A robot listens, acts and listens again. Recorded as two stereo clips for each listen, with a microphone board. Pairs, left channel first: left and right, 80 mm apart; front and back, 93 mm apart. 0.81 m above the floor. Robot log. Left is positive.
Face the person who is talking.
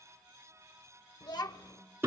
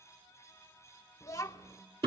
note: The child speaking: 55° left.
cmd yaw +55
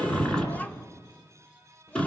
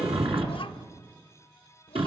note: The child speaking is now 20° left.
cmd yaw +20
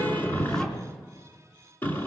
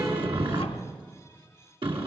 cmd idle
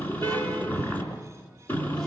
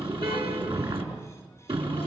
cmd idle
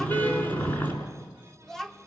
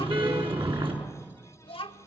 end: Facing the child speaking.